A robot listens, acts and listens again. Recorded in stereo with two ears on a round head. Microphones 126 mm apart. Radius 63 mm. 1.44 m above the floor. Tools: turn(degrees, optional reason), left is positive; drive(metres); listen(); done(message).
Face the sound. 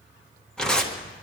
turn(degrees=30)
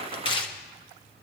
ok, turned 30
turn(degrees=145, reason="So it is at 145° left.")
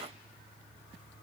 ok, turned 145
listen()
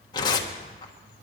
turn(degrees=30, reason="The tearing paper is now 30° left.")
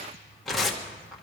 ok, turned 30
done("Facing the tearing paper, 1 to 2 m away.")